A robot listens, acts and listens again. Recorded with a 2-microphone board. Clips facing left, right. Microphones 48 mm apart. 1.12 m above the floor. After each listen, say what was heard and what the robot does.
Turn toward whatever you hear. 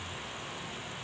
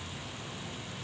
Keep listening.
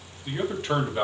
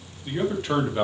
Turn 30° left.
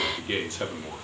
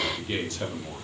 So it is at 155° left. Turn 155° left.
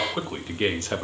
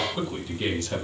The man speaking is now 45° left. Turn 45° left.
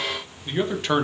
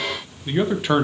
Found it: a man speaking, straight ahead, 1 to 2 m away.